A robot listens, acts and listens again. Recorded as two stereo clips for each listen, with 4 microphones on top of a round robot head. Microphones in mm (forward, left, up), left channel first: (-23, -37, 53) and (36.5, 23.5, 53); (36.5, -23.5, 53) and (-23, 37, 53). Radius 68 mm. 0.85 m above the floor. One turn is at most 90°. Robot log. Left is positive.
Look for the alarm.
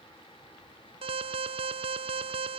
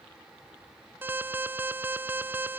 note: The alarm: 65° left.
cmd yaw +65
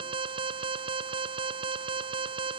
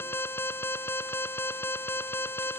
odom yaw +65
note: The alarm is now 20° left.
cmd yaw +20
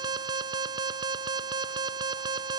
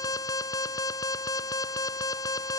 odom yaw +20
end: Found it: an alarm, straight ahead.